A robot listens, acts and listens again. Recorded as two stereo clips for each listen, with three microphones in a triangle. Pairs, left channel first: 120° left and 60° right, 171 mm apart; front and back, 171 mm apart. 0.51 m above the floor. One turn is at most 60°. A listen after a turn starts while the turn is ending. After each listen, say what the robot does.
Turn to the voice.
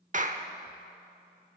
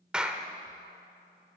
Keep listening.
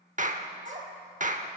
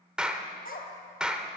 Turn 25° right.
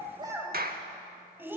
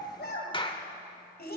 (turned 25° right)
Turn 15° left.
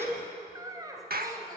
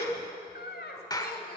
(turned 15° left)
Turn 10° left.
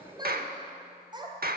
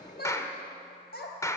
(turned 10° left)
Facing the child speaking, 2 to 4 m away.